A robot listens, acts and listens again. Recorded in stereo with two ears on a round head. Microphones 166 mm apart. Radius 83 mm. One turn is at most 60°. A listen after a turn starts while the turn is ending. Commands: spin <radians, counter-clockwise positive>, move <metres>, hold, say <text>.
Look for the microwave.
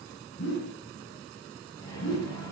spin 0.35
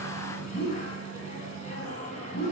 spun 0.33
spin 1.05
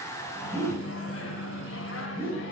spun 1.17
spin 1.05
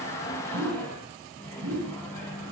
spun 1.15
spin 0.17
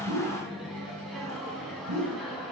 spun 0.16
say Found it: a microwave, straight ahead.